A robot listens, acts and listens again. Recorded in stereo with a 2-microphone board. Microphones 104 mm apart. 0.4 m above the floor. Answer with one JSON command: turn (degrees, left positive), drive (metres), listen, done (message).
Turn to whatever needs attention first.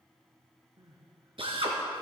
{"turn": -40}
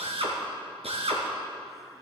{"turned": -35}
{"listen": true}
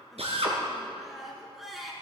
{"done": "Found it: crying, straight ahead, 2 to 4 m away."}